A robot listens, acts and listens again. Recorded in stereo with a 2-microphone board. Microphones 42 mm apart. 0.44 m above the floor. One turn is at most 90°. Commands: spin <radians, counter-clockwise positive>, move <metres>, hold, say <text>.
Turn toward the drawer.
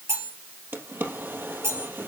spin -0.96
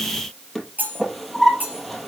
say Facing the drawer.